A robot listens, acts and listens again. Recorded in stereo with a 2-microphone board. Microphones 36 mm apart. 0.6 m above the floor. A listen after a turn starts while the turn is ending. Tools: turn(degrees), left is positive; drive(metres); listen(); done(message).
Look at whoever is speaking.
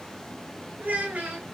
turn(degrees=-50)
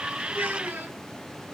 turn(degrees=-80)
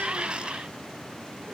listen()
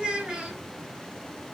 turn(degrees=-30)
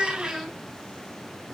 done("Facing the child speaking.")